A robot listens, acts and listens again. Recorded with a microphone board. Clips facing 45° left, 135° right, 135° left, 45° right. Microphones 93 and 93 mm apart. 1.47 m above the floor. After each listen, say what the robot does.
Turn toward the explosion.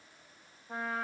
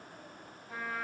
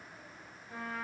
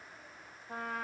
Keep listening.
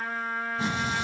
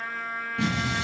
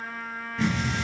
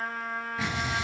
Turn 125° right.
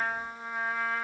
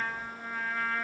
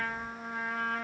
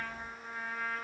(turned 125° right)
Facing where the explosion came from. I can't hear it now.